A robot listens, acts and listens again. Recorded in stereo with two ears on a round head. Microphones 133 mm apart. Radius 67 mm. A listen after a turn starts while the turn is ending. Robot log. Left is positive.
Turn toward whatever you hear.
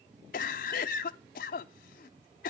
note: The cough: about 60° left or 120° left.
cmd yaw +60
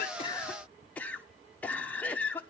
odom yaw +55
note: So it is at 10° left.
cmd yaw +10
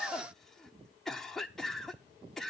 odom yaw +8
end: Facing the cough, under 1 m away.